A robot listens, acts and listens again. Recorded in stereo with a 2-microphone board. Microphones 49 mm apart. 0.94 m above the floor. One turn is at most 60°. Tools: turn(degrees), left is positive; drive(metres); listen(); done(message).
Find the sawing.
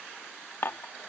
listen()
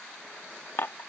listen()
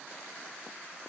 done("I can't make out sawing, only dishes clattering.")